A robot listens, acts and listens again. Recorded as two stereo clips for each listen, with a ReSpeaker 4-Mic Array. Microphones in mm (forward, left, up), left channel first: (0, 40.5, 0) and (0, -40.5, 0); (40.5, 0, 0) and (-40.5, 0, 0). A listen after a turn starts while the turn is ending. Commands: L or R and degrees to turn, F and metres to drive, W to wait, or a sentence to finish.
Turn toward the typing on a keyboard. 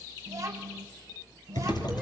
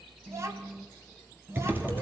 L115
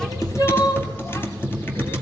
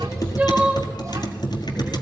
L30
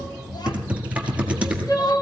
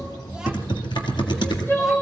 R20
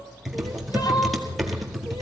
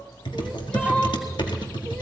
Found it: typing on a keyboard, straight ahead, 1 to 2 m away.